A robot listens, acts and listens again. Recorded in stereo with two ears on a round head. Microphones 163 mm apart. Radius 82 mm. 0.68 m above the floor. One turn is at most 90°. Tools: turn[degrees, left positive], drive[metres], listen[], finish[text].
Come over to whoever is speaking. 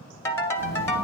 Thought: The child speaking: about 35° right or 145° right.
Action: turn[-35]
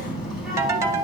Action: drive[1.0]
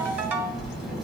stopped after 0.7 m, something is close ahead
Action: finish[Blocked. The child speaking is further on, straight ahead.]